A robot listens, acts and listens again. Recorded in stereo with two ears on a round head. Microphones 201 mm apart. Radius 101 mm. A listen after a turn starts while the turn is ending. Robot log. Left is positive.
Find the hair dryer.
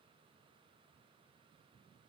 cmd idle
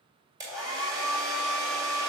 note: The hair dryer: about 15° right or 165° right.
cmd yaw -15
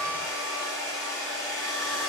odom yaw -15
end: Found it: a hair dryer, straight ahead, 2 to 4 m away.